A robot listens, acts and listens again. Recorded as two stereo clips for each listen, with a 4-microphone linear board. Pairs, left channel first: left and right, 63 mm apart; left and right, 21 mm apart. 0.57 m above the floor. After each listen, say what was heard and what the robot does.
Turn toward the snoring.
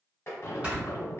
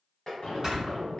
The snoring: about 20° right or 160° right. Turn 20° right.
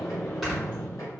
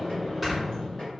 Found it: snoring, straight ahead.